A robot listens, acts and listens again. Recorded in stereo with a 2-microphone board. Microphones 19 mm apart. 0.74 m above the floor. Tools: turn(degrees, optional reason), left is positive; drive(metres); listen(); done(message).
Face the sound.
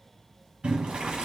turn(degrees=-70, reason="The boiling: about 70° right or 110° right.")
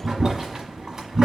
turn(degrees=-25, reason="So it is at 25° right.")
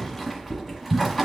done("Found it: boiling, straight ahead.")